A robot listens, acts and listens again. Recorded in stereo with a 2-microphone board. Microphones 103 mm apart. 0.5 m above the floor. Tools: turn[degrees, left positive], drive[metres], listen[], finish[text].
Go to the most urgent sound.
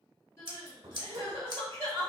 Thought: The crying: about 25° left or 155° left.
Action: turn[25]
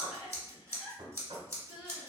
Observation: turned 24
Thought: So it is at 130° left.
Action: turn[130]
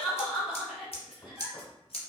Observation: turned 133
Action: drive[1.0]
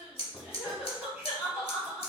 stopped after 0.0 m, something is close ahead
Thought: The crying is now 10° right.
Action: turn[-10]
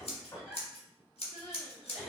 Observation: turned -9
Action: finish[Blocked. The crying is further on, straight ahead.]